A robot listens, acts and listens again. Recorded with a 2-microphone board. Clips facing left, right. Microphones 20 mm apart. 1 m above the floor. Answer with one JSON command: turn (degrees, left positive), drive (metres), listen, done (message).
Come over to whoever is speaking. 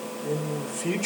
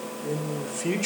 {"turn": -30}
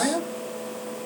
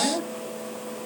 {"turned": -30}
{"turn": 15}
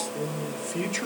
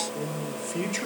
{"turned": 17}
{"drive": 1.0}
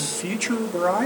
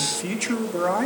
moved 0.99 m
{"drive": 1.0}
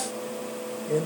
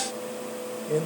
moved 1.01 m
{"drive": 1.0}
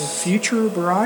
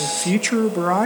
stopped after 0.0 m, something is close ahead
{"done": "I am next to the man speaking."}